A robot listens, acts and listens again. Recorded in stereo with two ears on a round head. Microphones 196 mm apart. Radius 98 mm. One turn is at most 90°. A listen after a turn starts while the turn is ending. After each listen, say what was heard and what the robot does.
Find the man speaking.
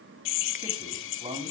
The man speaking: about 25° right or 155° right. Turn 25° right.
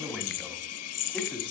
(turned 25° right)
Facing the man speaking.